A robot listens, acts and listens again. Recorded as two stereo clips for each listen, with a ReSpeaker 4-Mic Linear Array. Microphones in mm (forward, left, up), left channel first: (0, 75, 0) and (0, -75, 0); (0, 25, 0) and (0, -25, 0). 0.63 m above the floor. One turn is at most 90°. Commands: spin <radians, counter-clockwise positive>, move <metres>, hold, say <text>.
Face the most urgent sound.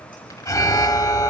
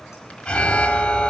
spin 0.35
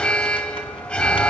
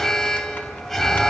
spin 0.17
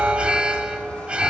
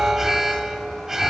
say Found it: an alarm, straight ahead, 1 to 2 m away.